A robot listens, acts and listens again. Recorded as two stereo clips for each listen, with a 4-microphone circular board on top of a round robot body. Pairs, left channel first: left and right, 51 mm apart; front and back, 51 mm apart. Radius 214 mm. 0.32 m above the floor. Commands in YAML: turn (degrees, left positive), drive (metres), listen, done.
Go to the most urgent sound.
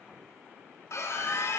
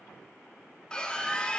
turn: 75
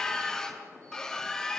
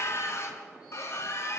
turn: 15
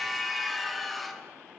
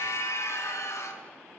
drive: 1.0
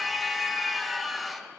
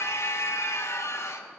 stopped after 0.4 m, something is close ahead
done: "Blocked. The scream is further on, straight ahead."